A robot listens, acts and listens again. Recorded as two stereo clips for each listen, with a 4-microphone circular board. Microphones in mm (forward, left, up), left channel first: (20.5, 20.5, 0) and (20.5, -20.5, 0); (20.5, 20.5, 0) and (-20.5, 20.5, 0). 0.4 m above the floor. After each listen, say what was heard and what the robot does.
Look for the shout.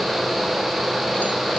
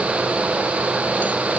Keep listening.
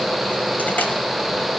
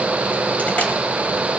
Keep listening.
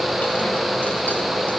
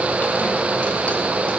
I can't make out a shout.